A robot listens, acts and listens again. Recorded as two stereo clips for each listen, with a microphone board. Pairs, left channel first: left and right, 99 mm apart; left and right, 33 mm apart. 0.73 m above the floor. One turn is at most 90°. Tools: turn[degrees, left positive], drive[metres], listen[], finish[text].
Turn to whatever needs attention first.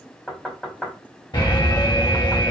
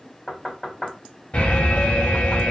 Thought: The alarm: about 50° left or 130° left.
Action: turn[50]
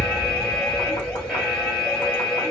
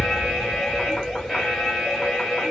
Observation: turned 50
Action: finish[Found it: an alarm, straight ahead, 1 to 2 m away.]